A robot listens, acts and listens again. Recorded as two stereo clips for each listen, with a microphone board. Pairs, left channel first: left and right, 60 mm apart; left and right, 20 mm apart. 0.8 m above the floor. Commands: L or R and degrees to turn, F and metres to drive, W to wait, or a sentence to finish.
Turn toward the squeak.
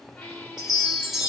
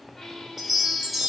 L20
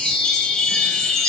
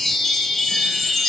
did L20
W
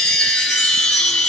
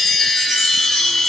W
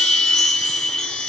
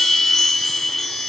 I heard a squeak, but can't make it out now. It was about straight ahead or 140° left.